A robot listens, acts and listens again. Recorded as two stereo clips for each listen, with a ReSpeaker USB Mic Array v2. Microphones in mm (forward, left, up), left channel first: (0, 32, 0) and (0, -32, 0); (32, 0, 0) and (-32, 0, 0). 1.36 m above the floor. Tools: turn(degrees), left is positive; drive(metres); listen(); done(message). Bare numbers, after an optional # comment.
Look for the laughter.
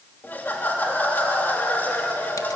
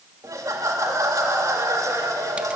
# The laughter: 150° left.
turn(150)
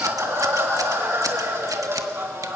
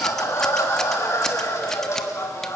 # The laughter is now 40° right.
turn(-40)
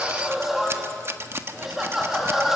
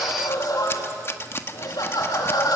done("Found it: laughter, straight ahead.")